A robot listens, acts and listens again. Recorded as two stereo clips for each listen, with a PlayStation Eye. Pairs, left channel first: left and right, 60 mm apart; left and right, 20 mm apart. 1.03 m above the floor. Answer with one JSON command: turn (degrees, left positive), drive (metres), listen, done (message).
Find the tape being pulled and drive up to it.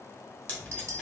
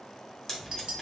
{"turn": 25}
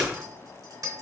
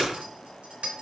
{"turn": 130}
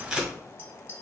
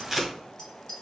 {"turn": -10}
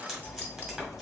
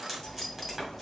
{"drive": 1.0}
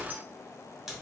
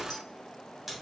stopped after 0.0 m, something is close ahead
{"done": "Blocked. The tape being pulled is further on, straight ahead."}